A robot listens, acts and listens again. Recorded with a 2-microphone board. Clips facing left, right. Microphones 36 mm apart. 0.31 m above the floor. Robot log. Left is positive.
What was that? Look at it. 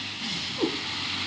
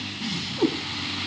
cmd yaw +30
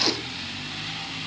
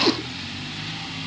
cmd idle
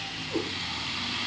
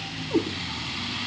note: So it is at 25° right.
cmd yaw -25
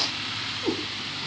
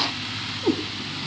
end: Found it: a cat meowing, straight ahead, 2 to 4 m away.